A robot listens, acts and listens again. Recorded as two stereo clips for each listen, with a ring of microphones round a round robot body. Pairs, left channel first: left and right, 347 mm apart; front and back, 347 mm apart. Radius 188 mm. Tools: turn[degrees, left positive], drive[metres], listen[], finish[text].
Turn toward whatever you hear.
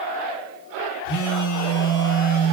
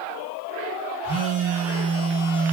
Thought: The phone buzzing: 75° left.
Action: turn[75]
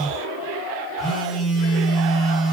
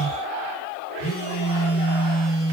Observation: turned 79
Action: finish[Found it: a phone buzzing, straight ahead, 1 to 2 m away.]